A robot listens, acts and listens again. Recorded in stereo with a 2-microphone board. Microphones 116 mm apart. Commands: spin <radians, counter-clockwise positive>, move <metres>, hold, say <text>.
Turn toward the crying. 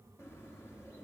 hold
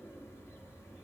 hold
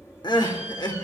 spin 0.70
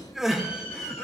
say Facing the crying.